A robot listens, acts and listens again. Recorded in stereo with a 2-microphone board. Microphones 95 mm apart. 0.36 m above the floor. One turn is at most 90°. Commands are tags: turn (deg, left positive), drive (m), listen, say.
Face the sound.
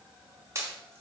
<turn deg="-30"/>
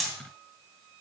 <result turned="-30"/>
<say>Found it: a pop, straight ahead.</say>